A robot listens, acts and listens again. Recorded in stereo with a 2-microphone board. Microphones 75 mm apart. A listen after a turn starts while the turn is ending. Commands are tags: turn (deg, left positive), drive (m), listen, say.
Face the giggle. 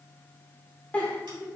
<turn deg="20"/>
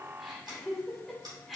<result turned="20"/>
<say>Found it: a giggle, straight ahead.</say>